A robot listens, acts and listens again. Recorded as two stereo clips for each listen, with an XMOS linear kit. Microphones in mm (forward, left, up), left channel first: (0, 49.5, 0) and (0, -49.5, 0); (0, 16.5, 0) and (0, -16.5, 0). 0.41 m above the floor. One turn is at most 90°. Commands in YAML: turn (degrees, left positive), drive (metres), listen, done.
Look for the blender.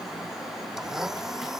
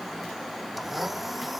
turn: -30
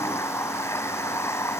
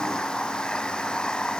turn: 30
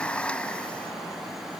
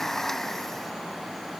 turn: 10
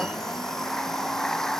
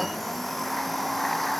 done: "Facing the blender."